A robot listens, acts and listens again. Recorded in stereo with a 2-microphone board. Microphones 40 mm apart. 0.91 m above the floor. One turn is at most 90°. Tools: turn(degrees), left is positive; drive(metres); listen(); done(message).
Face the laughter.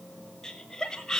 turn(degrees=30)
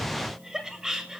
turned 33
turn(degrees=-15)
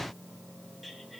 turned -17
done("Facing the laughter.")